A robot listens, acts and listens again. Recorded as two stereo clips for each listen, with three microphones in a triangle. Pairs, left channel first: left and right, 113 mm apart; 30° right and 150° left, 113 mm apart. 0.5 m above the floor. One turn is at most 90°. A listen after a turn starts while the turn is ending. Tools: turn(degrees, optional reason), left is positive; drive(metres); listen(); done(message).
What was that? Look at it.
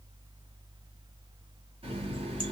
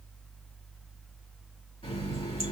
turn(degrees=-60, reason="The running tap: 60° right.")
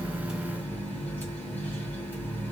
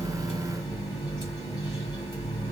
turn(degrees=15, reason="The running tap is now 15° left.")
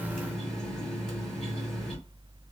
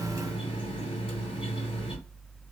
done("Found it: a running tap, straight ahead.")